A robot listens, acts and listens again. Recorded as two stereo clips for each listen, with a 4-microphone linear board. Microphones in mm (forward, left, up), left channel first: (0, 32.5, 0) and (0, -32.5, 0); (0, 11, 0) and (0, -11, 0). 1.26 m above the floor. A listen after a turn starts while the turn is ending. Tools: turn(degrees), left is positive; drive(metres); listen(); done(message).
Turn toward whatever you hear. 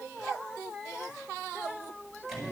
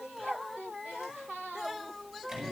turn(degrees=30)
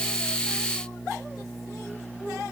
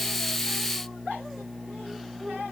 turn(degrees=150)
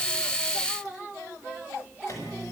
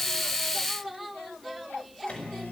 turn(degrees=50)
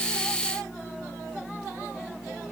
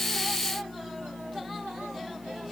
done("Found it: a microwave, straight ahead, over 4 m away.")